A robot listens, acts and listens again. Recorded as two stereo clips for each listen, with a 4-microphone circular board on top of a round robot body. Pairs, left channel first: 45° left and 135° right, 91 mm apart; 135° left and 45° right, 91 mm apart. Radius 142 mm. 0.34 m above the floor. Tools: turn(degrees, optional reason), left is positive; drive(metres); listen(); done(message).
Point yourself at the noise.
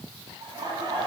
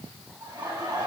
turn(degrees=-90, reason="The laughter: 90° right.")
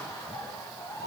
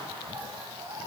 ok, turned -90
done("Found it: laughter, straight ahead.")